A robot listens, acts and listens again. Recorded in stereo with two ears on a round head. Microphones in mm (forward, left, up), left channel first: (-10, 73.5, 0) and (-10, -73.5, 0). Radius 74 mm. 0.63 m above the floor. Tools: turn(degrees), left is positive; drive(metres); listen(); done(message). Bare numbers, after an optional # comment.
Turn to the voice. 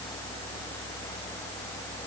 listen()
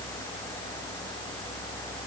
listen()
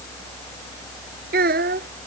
# The child speaking: about 55° right or 125° right.
turn(-55)
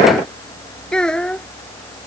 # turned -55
done("Facing the child speaking.")